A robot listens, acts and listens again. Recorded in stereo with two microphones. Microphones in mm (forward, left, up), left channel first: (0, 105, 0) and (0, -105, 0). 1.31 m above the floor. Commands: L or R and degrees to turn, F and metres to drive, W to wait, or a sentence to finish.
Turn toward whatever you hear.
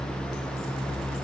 W
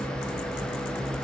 W
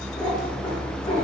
L25
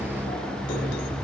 W
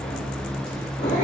L120
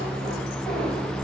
W
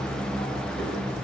W
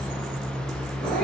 Facing the cat meowing, 2 to 4 m away.